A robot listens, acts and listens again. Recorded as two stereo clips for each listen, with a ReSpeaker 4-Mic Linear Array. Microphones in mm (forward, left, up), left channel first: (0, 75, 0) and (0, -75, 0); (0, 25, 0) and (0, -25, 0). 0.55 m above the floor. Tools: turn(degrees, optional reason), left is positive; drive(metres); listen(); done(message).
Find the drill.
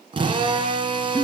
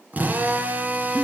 turn(degrees=-35, reason="The drill: about 35° right or 145° right.")
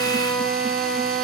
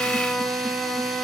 done("Facing the drill, 2 to 4 m away.")